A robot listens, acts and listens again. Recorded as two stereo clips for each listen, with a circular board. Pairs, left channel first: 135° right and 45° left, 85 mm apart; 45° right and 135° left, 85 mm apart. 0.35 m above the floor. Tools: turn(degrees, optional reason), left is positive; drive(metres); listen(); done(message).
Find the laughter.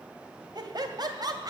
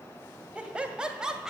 turn(degrees=55, reason="The laughter: 55° left.")
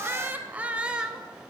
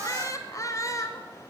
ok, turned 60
turn(degrees=-30, reason="The laughter is now 30° right.")
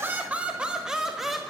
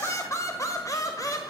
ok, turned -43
turn(degrees=-45, reason="The laughter is now 45° right.")
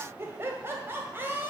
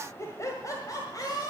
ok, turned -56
turn(degrees=-15, reason="The laughter is now 15° right.")
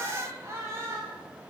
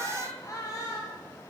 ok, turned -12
done("Facing the laughter.")